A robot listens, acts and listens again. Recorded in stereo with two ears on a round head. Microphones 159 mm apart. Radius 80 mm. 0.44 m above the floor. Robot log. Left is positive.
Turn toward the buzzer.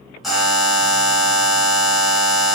cmd yaw +30
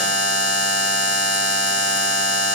note: So it is at 150° left.
cmd yaw +150
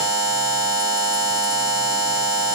note: The buzzer is now 25° right.
cmd yaw -25
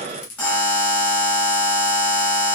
note: The buzzer is now 10° left.
cmd yaw +10
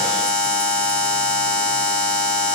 end: Found it: a buzzer, straight ahead.